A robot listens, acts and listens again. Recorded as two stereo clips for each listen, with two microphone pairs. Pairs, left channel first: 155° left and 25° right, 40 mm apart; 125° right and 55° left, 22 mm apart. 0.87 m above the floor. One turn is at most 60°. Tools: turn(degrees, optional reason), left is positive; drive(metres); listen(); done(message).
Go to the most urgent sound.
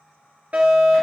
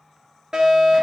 turn(degrees=15, reason="The fire alarm: 15° left.")
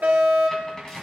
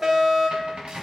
drive(metres=1.0)
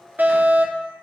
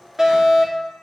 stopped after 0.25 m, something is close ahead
done("Blocked. The fire alarm is further on, straight ahead.")